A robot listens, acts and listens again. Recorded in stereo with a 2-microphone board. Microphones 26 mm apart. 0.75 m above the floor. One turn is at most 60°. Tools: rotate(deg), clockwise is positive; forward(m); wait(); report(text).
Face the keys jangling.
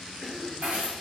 rotate(60)
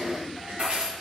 rotate(40)
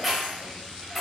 report("Found it: keys jangling, straight ahead, 2 to 4 m away.")